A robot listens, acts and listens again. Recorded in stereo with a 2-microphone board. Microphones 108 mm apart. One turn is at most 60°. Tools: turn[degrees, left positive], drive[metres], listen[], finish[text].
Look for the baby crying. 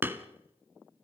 Action: listen[]
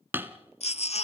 Thought: The baby crying: about 75° left or 105° left.
Action: turn[60]
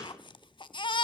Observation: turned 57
Thought: So it is at 50° left.
Action: turn[50]
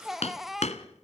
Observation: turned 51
Action: finish[Found it: a baby crying, straight ahead.]